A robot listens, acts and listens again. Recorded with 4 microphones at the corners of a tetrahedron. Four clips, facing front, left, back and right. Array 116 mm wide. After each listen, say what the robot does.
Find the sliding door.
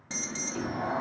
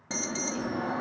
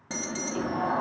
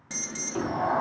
Turn 100° right.
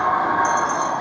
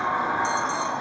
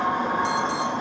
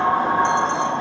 Turn 30° right.
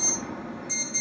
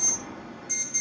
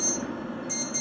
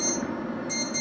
Keep listening.
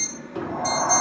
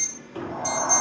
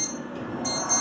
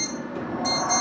Turn 20° left.
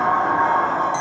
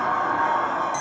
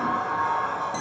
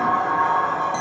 Facing the sliding door.